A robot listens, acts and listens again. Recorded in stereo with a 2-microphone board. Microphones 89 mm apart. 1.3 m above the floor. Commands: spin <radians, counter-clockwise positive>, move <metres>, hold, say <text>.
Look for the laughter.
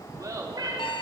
spin -0.79
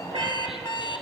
hold
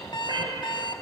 hold
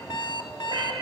say I heard laughter, but can't make it out now. It was about straight ahead or 90° right.